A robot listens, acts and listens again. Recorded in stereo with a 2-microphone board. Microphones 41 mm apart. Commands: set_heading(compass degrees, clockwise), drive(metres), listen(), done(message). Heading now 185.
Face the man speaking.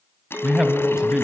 set_heading(205)
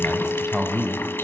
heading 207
set_heading(222)
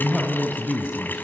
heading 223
set_heading(253)
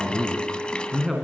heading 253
done("Facing the man speaking.")